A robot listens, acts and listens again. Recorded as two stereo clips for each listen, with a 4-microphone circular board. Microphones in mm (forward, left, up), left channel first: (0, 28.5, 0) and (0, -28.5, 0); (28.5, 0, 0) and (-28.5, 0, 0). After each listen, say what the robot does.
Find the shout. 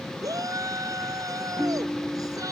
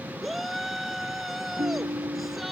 Turn 90° right.
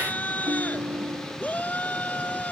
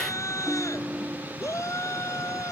Turn 30° left.
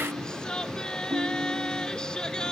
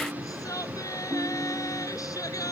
Turn 10° left.
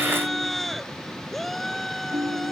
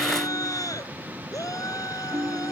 Facing the shout.